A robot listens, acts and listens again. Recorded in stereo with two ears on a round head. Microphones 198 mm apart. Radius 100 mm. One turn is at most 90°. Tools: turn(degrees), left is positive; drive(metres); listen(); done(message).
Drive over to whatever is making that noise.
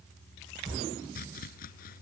turn(degrees=40)
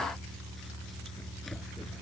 listen()
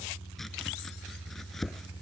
drive(metres=1.0)
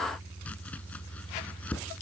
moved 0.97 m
drive(metres=1.0)
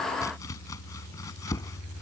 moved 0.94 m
turn(degrees=15)
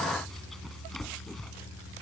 drive(metres=1.0)
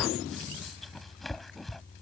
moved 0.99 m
drive(metres=1.0)
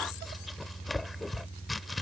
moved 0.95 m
drive(metres=1.0)
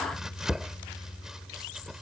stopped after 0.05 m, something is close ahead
done("I am next to the chopping.")